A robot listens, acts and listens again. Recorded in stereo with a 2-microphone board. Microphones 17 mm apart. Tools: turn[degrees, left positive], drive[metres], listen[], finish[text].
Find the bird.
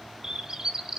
Thought: The bird: about 35° right or 145° right.
Action: turn[-35]
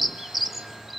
Action: finish[Facing the bird, 1 to 2 m away.]